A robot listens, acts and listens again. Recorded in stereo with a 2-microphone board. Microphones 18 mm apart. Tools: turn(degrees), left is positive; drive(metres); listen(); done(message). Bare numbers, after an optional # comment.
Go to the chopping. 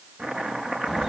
turn(-90)
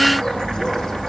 listen()
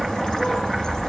listen()
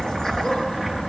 done("Facing where the chopping came from. I can't hear it now. I did not reach it.")